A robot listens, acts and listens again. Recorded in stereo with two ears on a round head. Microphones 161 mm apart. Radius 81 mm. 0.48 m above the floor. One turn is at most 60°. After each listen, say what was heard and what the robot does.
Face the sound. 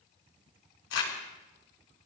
Turn 60° left.
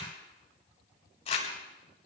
So it is at 35° left. Turn 35° left.
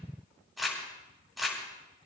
Found it: crumpling, straight ahead.